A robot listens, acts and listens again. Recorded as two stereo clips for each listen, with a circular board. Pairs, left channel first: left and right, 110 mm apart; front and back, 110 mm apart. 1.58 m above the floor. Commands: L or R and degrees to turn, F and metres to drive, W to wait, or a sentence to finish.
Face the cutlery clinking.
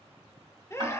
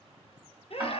W
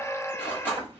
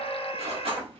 L160
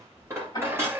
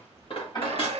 R25
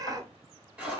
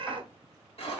R10
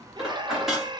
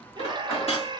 Facing the cutlery clinking, 1 to 2 m away.